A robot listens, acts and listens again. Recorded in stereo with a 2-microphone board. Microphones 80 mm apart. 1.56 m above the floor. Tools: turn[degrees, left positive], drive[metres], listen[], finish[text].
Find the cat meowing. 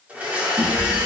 Thought: The cat meowing: about 25° right or 155° right.
Action: turn[-25]
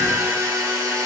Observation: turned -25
Action: listen[]
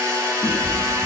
Action: finish[Facing the cat meowing, 1 to 2 m away.]